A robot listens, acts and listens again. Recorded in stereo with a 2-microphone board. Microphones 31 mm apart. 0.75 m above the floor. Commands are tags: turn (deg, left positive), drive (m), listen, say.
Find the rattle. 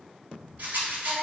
<turn deg="-75"/>
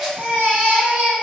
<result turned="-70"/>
<listen/>
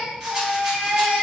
<listen/>
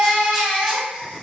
<say>I heard a rattle, but can't make it out now. It was about 5° right or 35° right.</say>